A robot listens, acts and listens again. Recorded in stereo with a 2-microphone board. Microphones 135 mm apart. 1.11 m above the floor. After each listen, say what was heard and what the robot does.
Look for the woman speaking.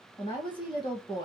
The woman speaking: about 35° left or 145° left. Turn 35° left.
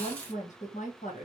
So it is at 105° left. Turn 105° left.
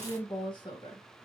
The woman speaking is now 40° left. Turn 40° left.
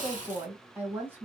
The woman speaking is now 15° right. Turn 15° right.
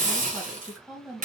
Found it: a woman speaking, straight ahead, 1 to 2 m away.